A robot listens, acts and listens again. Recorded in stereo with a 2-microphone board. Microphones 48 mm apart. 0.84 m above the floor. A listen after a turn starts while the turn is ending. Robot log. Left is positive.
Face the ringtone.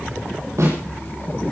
cmd idle
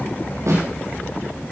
cmd idle
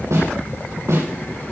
end: I can't make out a ringtone, only a snare drum.